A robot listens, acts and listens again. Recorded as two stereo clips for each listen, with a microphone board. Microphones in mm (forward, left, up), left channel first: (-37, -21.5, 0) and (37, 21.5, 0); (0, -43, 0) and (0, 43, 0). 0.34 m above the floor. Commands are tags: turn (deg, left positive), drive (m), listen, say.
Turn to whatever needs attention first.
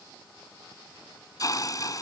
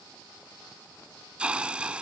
<listen/>
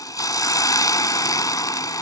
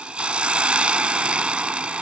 <listen/>
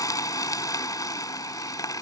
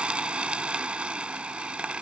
<say>I can't make out anything urgent to turn to.</say>